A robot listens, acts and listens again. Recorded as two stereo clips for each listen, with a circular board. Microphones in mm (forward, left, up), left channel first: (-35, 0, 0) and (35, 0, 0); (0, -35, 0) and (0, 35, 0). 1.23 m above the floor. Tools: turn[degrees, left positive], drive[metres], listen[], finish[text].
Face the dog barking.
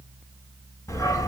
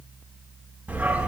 Thought: The dog barking: 165° left.
Action: turn[165]
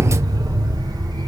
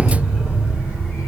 Thought: The dog barking is now 25° left.
Action: turn[25]
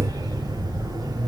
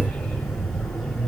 Action: finish[Found it: a dog barking, straight ahead.]